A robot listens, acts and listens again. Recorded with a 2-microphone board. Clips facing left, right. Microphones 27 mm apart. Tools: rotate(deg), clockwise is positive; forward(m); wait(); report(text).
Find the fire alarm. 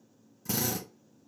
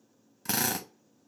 wait()
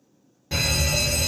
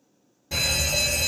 rotate(-20)
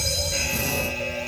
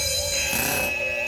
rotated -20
report("Facing the fire alarm.")